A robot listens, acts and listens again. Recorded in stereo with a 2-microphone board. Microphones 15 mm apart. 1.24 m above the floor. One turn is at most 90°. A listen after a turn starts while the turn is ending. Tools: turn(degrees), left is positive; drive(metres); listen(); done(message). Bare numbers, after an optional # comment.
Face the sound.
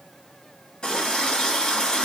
turn(90)
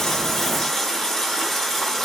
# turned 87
# So it is at 10° left.
turn(10)
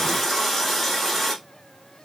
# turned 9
done("Facing the running tap, 1 to 2 m away.")